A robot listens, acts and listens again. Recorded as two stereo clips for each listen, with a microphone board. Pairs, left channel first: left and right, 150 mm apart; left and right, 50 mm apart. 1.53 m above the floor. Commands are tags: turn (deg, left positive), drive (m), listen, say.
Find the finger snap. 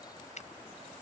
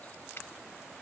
<turn deg="50"/>
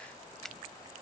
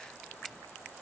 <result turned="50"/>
<listen/>
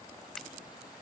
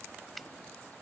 <listen/>
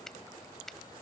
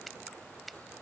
<say>Facing the finger snap.</say>